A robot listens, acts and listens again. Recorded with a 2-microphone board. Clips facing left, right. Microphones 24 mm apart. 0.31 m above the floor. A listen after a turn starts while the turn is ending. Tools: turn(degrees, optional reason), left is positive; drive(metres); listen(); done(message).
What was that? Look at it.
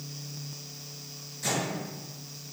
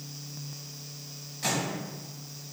turn(degrees=-50, reason="The microwave: about 50° right or 130° right.")
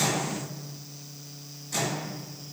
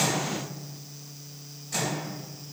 turn(degrees=-10, reason="So it is at 10° right.")
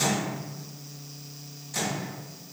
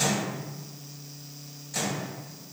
done("Facing the microwave, 1 to 2 m away.")